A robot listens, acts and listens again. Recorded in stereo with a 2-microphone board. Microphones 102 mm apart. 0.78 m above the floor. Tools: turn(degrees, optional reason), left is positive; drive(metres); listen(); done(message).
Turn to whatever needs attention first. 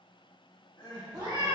turn(degrees=45, reason="The crying: about 45° left or 135° left.")
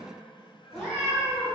turn(degrees=85, reason="So it is at 85° left.")
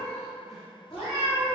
listen()
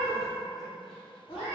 listen()
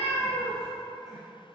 done("I heard crying from this way, but can't make it out now.")